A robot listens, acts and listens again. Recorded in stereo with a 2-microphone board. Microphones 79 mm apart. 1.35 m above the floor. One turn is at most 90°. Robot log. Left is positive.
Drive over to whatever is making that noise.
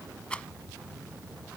cmd yaw +30
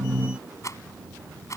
note: So it is at 135° left.
cmd yaw +90
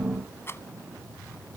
note: The rattle is now 35° left.
cmd yaw +35
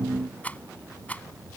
note: The rattle is now 20° left.
cmd yaw +20
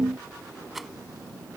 cmd fwd 1.0
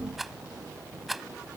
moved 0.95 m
cmd fwd 1.0
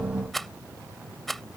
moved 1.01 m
cmd fwd 1.0
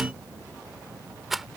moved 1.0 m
cmd fwd 1.0
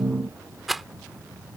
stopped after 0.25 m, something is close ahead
end: I am next to the rattle.